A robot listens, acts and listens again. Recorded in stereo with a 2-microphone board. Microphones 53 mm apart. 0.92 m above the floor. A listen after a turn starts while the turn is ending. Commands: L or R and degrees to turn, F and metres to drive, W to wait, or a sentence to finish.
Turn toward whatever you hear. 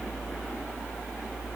W
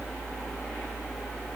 W
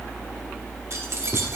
R60
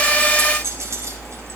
R60
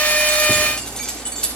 L15
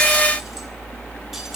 W
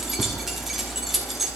Found it: keys jangling, straight ahead, 1 to 2 m away.